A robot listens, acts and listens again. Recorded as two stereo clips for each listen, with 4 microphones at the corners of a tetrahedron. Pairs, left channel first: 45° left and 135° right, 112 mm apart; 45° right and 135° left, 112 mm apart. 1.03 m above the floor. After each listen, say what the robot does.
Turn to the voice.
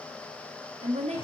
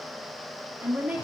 Turn 150° right.
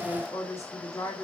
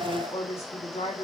Turn 20° right.
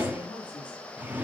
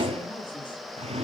Keep listening.
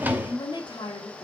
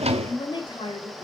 Found it: a woman speaking, straight ahead, 1 to 2 m away.